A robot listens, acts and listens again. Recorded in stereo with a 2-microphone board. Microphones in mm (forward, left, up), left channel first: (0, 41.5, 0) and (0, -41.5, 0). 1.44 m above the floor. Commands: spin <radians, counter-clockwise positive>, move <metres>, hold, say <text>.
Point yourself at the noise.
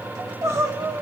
spin -0.61
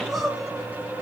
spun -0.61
say Found it: crying, straight ahead, 2 to 4 m away.